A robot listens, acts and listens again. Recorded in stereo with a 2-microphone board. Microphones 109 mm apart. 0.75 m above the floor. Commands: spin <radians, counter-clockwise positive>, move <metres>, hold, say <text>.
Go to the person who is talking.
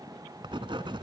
hold
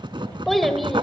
spin 0.52
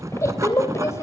spin 2.62
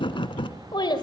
spin 0.87
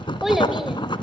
hold
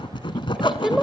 move 1.0
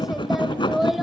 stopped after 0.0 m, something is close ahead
say Blocked. The child speaking is further on, straight ahead.